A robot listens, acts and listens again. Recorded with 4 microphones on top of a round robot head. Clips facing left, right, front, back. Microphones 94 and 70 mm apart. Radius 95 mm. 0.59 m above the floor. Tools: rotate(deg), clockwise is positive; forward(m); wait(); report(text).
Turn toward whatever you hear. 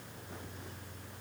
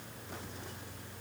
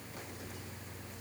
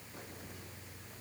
wait()
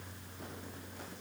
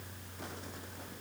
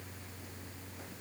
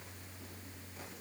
wait()
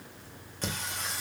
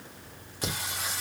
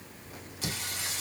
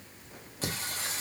rotate(-180)
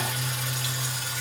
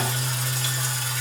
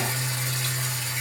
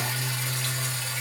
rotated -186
rotate(70)
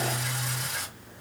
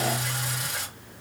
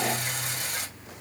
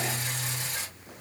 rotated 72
report("Facing the singing.")